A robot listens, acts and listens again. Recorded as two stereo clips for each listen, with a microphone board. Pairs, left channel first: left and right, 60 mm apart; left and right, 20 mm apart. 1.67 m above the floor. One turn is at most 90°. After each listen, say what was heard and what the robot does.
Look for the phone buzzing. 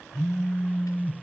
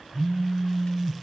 Turn 30° left.
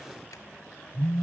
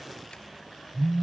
So it is at 140° left. Turn 90° left.
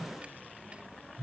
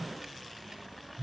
The phone buzzing is now 50° left. Turn 50° left.
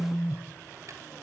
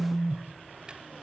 Facing the phone buzzing, 1 to 2 m away.